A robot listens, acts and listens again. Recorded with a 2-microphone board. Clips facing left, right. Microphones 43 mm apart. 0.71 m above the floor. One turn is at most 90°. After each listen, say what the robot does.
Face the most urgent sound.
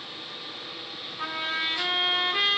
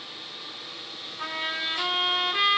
Keep listening.
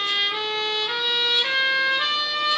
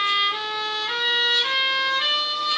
Keep listening.
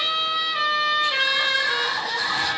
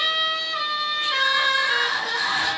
Turn 90° right.
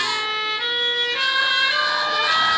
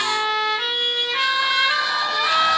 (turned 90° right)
Turn 10° left.
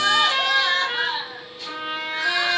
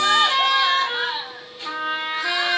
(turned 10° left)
Found it: crying, straight ahead.